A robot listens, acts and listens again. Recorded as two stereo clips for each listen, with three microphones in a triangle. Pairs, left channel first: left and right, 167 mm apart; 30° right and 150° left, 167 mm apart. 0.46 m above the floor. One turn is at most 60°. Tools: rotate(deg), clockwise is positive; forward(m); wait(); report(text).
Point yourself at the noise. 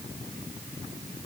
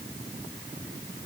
wait()
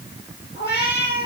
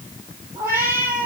rotate(-60)
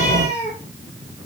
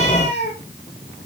rotate(-20)
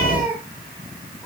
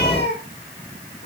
rotate(10)
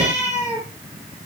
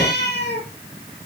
rotate(10)
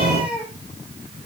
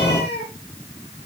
report("Found it: a cat meowing, straight ahead, over 4 m away.")